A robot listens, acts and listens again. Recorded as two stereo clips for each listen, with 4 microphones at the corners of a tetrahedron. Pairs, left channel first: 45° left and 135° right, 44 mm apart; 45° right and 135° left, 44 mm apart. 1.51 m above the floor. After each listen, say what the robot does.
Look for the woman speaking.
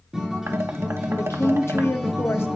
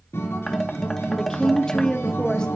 Turn 25° left.
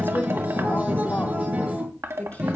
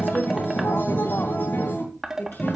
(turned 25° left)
Turn 10° right.
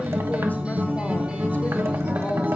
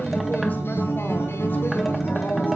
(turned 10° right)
Keep listening.
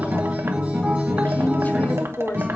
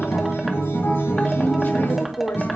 Facing the woman speaking, 2 to 4 m away.